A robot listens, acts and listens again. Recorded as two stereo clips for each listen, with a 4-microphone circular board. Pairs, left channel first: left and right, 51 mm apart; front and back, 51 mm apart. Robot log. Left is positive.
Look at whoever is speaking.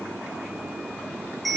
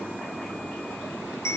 cmd idle
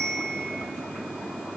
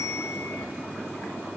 cmd idle
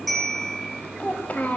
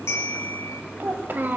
note: The child speaking: 140° left.
cmd yaw +140
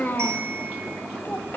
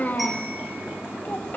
note: The child speaking is now 50° left.
cmd yaw +50
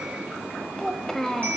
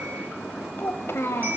note: The child speaking is now 10° left.
cmd yaw +10
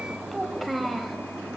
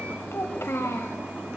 end: Found it: a child speaking, straight ahead.